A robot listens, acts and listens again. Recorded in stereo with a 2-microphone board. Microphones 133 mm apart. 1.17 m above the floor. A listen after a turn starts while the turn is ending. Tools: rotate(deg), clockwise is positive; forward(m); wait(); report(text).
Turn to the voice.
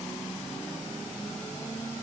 wait()
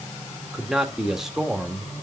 rotate(30)
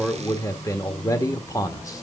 rotate(-25)
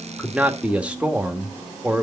rotate(10)
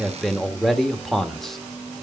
report("Facing the man speaking, 1 to 2 m away.")